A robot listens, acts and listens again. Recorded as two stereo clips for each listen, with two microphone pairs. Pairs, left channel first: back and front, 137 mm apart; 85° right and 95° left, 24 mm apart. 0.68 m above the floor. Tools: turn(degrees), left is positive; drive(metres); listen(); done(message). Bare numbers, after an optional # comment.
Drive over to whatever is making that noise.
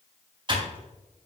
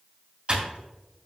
# The typing on a keyboard: 50° left.
turn(50)
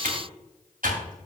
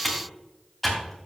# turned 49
drive(1.0)
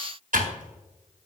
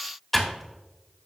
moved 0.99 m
drive(1.0)
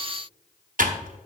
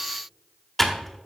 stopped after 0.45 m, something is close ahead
done("I am next to the typing on a keyboard.")